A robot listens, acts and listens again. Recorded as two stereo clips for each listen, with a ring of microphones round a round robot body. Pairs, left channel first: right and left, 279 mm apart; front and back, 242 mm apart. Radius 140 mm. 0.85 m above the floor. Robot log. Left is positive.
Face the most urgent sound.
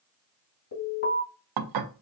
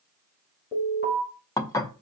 note: The alarm: 55° right.
cmd yaw -55
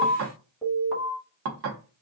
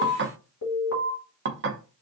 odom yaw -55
end: Found it: an alarm, straight ahead, 2 to 4 m away.